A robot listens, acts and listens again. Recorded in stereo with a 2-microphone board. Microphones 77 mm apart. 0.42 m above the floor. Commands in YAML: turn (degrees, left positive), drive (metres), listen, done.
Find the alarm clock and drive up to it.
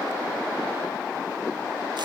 listen: true
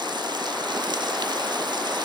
listen: true
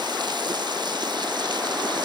done: "I can't make out an alarm clock to turn to."